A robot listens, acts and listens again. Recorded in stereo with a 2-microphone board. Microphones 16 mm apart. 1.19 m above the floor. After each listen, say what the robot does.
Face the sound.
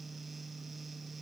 Keep listening.
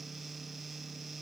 Keep listening.
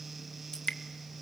Turn 45° left.
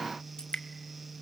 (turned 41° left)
Turn 85° left.
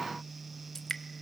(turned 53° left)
Turn 30° left.
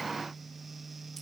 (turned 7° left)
Turn 25° left.
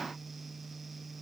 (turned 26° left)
Keep listening.
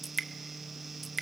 Found it: dripping, straight ahead, 1 to 2 m away.